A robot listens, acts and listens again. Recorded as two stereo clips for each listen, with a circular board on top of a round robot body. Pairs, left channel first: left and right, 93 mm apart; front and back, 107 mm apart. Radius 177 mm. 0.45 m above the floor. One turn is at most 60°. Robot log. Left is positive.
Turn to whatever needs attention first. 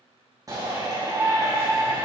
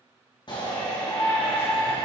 note: The shout: 40° right.
cmd yaw -40
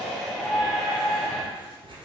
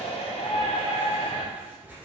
end: Facing the shout.